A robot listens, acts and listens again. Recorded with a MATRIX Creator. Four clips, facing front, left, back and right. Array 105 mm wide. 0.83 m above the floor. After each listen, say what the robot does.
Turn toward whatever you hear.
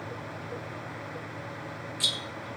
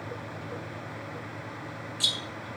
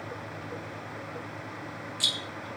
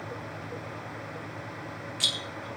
Turn 105° right.
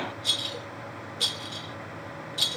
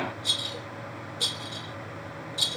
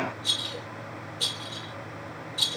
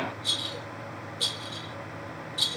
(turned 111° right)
Turn 10° left.
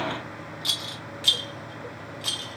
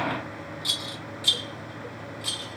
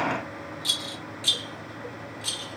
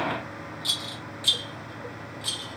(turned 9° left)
Facing the rattle.